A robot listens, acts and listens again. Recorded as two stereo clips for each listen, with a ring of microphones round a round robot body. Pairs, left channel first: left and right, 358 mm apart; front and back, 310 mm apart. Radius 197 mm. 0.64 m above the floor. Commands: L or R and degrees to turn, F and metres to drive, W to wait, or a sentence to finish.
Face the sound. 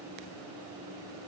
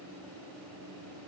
W
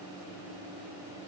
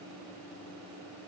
W
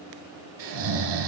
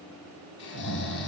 R60
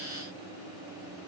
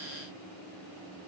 W
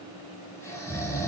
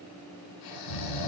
Facing the snoring, 2 to 4 m away.